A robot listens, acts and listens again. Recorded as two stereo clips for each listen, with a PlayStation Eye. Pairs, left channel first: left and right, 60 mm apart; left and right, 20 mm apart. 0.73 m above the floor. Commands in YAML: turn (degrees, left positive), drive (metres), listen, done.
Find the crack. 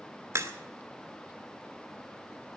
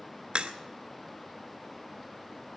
turn: -50
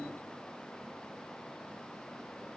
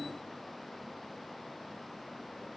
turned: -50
listen: true
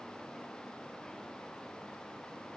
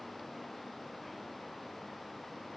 done: "I heard a crack, but can't make it out now. It was about straight ahead or 80° right."